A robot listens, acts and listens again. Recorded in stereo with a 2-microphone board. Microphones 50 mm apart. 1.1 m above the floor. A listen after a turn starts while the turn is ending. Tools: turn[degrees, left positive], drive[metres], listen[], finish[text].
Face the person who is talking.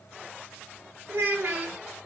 Thought: The child speaking: about 70° right or 110° right.
Action: turn[-70]
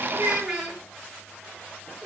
Action: finish[Found it: a child speaking, straight ahead.]